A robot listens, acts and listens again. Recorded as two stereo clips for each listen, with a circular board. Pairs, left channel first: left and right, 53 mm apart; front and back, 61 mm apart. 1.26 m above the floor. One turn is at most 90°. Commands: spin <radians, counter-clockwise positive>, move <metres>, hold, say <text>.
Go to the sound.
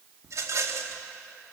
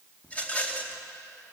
spin -1.13
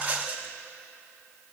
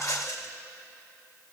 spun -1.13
spin -0.52
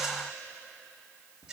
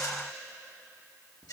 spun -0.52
spin -0.26
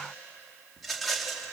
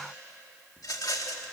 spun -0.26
move 1.0
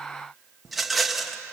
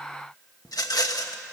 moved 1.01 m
move 1.0
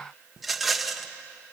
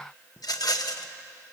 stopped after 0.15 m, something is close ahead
say Arrived at the rattle, straight ahead.